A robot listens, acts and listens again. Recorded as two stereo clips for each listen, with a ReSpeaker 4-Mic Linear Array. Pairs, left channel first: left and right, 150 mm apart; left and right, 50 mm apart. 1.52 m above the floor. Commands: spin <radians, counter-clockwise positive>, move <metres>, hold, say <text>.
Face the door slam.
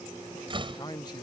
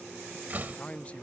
spin -0.61
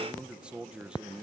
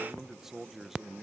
hold
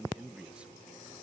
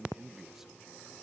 say I heard a door slam, but can't make it out now. It was about straight ahead or 110° right.